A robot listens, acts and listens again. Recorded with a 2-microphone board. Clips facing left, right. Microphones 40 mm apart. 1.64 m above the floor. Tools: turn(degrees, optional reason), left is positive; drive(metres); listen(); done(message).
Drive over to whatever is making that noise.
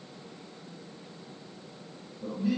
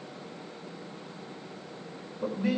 turn(degrees=-90)
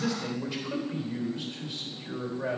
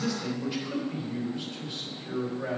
drive(metres=1.0)
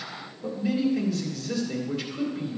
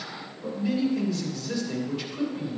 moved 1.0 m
drive(metres=1.0)
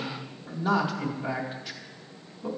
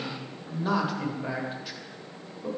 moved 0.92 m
drive(metres=1.0)
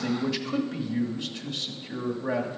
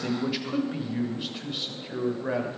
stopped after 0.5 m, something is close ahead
turn(degrees=-10, reason="The man speaking is now 10° right.")
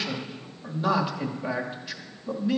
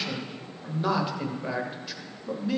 done("I am next to the man speaking.")